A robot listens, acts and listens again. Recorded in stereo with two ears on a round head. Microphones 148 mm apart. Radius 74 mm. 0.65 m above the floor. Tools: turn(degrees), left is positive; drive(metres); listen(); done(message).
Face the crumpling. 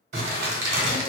turn(degrees=-90)
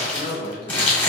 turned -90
turn(degrees=10)
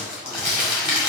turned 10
done("Facing the crumpling, 1 to 2 m away.")